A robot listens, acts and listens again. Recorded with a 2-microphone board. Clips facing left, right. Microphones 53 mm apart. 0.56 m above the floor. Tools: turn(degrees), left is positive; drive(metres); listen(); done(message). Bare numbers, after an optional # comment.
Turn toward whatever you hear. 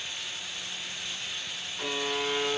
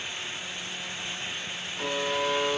turn(-30)
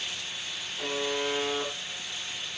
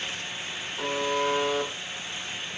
# So it is at 145° right.
turn(-145)
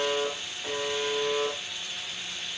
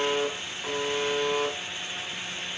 # The buzzer is now 40° right.
turn(-40)
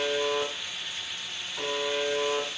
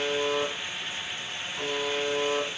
done("Found it: a buzzer, straight ahead, over 4 m away.")